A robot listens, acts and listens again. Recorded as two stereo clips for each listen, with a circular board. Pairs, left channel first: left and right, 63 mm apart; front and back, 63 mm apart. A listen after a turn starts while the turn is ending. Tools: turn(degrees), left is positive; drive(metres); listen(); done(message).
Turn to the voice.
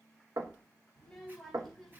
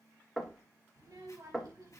turn(degrees=180)
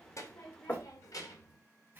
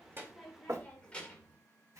turn(degrees=75)
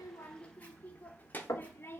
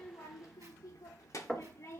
turn(degrees=40)
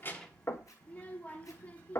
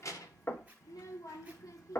turn(degrees=25)
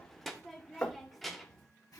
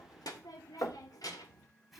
done("Found it: a child speaking, straight ahead.")